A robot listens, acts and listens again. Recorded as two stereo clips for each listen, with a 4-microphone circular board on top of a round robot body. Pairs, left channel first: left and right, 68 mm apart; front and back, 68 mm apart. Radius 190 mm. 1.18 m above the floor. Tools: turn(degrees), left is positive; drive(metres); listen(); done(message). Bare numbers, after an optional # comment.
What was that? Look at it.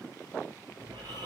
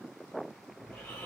# The snoring: 80° right.
turn(-80)
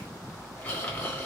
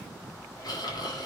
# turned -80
# The snoring is now 20° left.
turn(20)
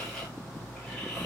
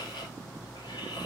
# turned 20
done("Facing the snoring.")